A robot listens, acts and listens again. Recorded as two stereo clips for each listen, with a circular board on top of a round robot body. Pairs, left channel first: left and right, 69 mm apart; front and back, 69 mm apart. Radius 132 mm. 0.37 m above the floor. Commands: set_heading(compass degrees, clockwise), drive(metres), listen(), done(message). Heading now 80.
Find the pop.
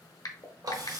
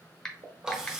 set_heading(300)
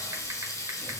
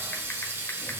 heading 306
done("I heard a pop from this way, but can't make it out now.")